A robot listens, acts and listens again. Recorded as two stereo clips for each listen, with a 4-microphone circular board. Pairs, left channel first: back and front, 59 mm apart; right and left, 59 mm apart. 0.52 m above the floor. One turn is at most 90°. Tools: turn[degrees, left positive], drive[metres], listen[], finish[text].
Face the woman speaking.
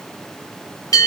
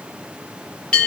Action: listen[]
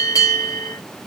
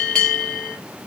Action: listen[]
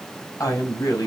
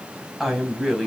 Thought: The woman speaking: straight behind.
Action: turn[90]
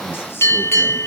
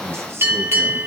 Thought: Nothing new. It was at 90° left.
Action: turn[90]
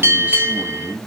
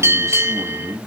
Thought: The woman speaking is now 65° left.
Action: turn[65]
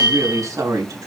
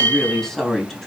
Action: finish[Facing the woman speaking, 2 to 4 m away.]